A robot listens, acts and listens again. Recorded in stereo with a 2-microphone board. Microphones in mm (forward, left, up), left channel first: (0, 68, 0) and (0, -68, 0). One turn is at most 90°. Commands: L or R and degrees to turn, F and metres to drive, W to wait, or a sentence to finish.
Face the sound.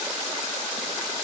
W
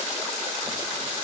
W
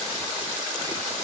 I can't make out anything.